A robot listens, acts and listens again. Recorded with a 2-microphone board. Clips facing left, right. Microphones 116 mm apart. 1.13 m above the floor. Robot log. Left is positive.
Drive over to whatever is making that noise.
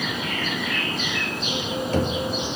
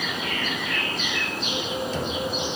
note: The knocking: about 60° left or 120° left.
cmd yaw +60
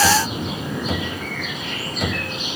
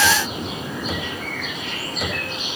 cmd fwd 1.0
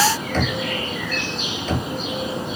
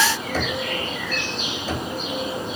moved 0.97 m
cmd fwd 1.0
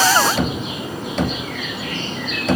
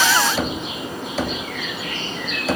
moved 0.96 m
cmd fwd 1.0
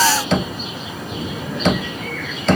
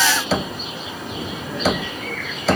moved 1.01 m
cmd fwd 1.0
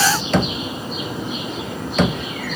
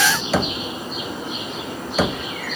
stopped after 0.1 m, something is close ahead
end: Arrived at the knocking, straight ahead.